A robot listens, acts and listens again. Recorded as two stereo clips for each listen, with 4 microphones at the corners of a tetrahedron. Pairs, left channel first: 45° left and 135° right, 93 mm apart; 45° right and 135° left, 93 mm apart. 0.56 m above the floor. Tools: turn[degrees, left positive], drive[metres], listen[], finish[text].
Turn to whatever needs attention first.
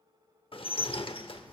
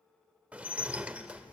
Action: listen[]
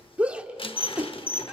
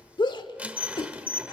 Thought: The shout: 60° right.
Action: turn[-60]
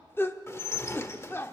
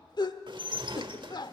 Thought: The shout is now 15° right.
Action: turn[-15]
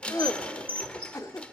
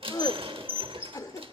Action: finish[Found it: a shout, straight ahead, 1 to 2 m away.]